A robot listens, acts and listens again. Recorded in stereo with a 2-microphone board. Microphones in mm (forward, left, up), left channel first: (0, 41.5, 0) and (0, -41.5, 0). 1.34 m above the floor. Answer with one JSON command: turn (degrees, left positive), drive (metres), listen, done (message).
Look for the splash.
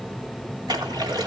{"turn": -60}
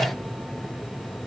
{"listen": true}
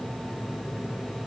{"done": "I heard a splash, but can't make it out now. It was about straight ahead or 60° right."}